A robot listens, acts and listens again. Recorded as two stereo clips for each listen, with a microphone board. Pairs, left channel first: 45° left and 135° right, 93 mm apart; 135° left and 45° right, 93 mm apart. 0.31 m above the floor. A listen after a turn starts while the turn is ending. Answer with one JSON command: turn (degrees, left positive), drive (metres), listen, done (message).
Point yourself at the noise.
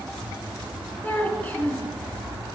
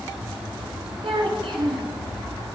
{"turn": -25}
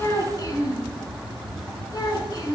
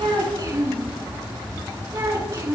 {"done": "Facing the child speaking."}